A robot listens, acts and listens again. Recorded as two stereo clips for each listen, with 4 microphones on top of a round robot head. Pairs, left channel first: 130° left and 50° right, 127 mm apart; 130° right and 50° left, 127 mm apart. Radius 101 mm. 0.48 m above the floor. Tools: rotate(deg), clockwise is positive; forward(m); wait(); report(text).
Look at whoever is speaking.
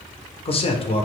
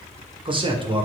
rotate(-95)
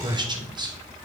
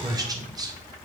report("Found it: a man speaking, straight ahead, 1 to 2 m away.")